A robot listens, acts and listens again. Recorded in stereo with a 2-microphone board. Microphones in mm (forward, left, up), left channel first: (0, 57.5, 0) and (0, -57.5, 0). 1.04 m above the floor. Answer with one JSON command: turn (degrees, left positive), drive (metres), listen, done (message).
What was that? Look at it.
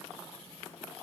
{"listen": true}
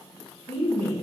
{"turn": 20}
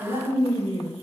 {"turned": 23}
{"turn": 135}
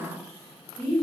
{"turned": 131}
{"done": "Found it: a woman speaking, straight ahead."}